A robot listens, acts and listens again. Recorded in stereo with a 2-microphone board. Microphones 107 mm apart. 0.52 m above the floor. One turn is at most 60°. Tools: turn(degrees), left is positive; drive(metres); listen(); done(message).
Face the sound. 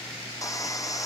turn(degrees=30)
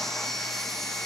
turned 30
done("Facing the sawing.")